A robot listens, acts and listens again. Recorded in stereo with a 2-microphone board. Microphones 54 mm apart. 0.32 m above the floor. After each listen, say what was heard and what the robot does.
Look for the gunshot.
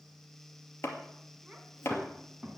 Turn 30° right.
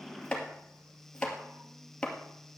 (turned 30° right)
Keep listening.
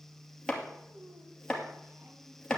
I heard a gunshot, but can't make it out now. It was about 20° left or 140° right.